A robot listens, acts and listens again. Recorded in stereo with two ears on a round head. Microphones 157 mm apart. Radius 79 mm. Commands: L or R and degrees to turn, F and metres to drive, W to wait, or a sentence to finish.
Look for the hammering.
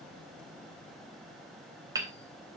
R20
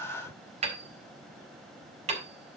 R140
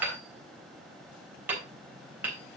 R10
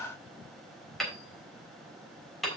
Found it: hammering, straight ahead, 2 to 4 m away.